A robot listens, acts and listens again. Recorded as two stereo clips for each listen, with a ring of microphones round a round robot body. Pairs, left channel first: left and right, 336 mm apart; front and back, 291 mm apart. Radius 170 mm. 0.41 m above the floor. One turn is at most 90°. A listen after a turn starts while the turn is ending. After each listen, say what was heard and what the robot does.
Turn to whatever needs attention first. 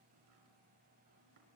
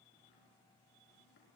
Keep listening.
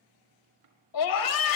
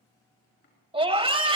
The scream: 110° left. Turn 90° left.
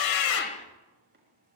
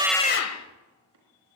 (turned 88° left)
The scream is now 20° left. Turn 20° left.
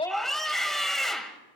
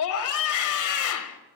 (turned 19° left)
Facing the scream.